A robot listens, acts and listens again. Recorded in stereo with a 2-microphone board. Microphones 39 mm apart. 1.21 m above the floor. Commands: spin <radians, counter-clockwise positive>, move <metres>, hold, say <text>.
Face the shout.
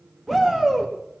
spin 0.52
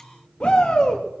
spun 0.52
spin 2.53
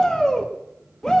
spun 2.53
spin 0.17
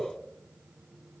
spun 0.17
hold
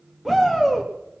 say Found it: a shout, straight ahead, 1 to 2 m away.